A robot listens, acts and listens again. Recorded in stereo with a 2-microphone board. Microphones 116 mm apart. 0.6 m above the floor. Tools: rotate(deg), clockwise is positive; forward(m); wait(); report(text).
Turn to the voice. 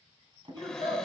rotate(45)
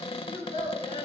rotate(90)
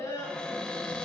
rotate(-30)
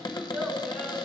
report("Facing the child speaking, over 4 m away.")